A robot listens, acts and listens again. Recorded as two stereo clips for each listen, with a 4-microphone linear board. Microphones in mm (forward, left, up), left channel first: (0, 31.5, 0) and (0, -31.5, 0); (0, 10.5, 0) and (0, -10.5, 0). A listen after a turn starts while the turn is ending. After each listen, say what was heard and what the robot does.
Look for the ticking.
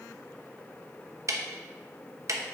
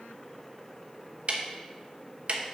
The ticking: about 55° right or 125° right. Turn 55° right.
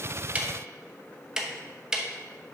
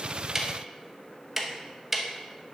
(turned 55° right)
So it is at 10° right. Turn 10° right.
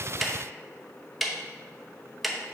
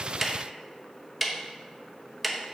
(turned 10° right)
Facing the ticking.